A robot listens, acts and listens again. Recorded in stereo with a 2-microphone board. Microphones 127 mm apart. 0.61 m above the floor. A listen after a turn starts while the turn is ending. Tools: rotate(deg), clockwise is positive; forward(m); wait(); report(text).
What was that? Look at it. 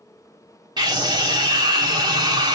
rotate(35)
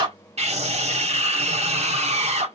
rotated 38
rotate(100)
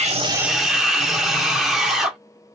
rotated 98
report("Found it: a scream, straight ahead, 1 to 2 m away.")